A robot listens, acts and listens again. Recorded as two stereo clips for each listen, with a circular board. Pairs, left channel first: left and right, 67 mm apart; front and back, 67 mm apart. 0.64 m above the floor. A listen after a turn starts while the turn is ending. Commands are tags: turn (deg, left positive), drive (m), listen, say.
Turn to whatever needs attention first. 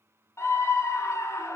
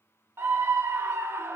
<turn deg="130"/>
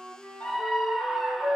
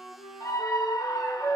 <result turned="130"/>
<say>Facing the scream, 1 to 2 m away.</say>